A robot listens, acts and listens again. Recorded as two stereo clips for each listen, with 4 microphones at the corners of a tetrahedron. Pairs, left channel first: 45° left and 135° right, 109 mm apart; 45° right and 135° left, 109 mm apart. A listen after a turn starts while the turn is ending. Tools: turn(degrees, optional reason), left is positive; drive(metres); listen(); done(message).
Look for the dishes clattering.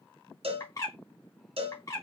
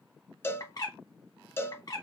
listen()
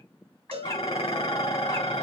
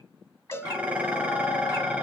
turn(degrees=60, reason="The dishes clattering: 60° left.")
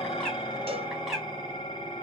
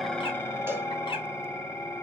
turn(degrees=15, reason="The dishes clattering is now 15° left.")
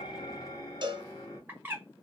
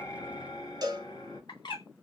done("Found it: dishes clattering, straight ahead.")